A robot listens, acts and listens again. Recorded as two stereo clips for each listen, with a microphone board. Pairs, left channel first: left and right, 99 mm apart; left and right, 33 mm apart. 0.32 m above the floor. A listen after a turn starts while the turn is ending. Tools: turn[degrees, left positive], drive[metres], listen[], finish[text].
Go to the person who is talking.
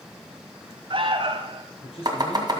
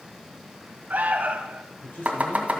Thought: The man speaking: about 75° left or 105° left.
Action: turn[75]
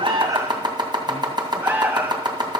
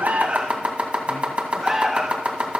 Action: listen[]
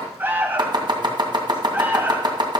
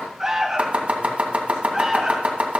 Action: listen[]
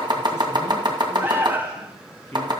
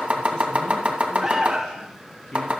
Thought: So it is at 25° left.
Action: turn[25]
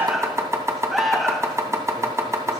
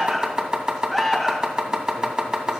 Action: listen[]
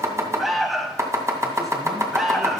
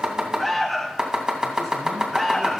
Action: listen[]
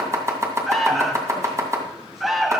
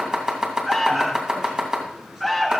Action: finish[I heard a man speaking from this way, but can't make it out now. I did not reach it.]